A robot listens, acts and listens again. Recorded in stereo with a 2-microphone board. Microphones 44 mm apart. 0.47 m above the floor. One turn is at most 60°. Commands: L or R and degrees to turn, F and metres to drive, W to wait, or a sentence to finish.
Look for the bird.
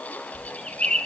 L20
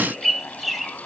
Found it: a bird, straight ahead.